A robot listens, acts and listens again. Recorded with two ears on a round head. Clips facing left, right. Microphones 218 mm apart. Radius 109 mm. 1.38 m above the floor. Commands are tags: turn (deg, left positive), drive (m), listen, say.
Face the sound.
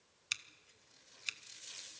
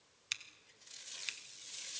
<turn deg="30"/>
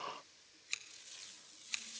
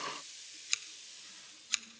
<turn deg="-20"/>
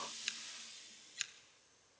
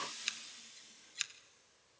<say>Facing the scissors, under 1 m away.</say>